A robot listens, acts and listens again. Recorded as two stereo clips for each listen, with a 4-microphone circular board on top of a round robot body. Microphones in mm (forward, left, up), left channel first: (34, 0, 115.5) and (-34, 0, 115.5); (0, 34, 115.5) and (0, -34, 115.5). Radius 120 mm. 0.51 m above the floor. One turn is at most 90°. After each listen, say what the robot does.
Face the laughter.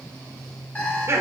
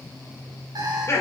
Turn 90° left.
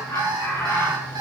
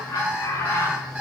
Turn 50° left.
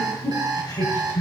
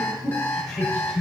Found it: laughter, straight ahead, over 4 m away.